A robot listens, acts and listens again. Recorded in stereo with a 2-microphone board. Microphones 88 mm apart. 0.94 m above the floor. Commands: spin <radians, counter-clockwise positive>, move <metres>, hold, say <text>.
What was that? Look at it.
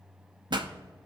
spin -1.05
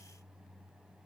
hold
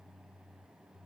say I heard a pop, but can't make it out now. It was about straight ahead or 60° right.